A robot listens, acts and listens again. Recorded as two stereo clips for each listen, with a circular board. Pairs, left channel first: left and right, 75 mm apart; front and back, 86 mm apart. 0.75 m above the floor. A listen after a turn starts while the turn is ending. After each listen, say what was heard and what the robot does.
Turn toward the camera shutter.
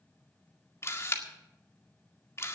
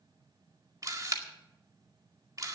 The camera shutter: 135° left. Turn 135° left.
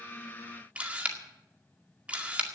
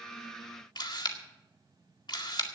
The camera shutter is now 20° right. Turn 20° right.
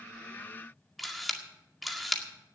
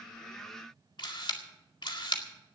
Facing the camera shutter, 2 to 4 m away.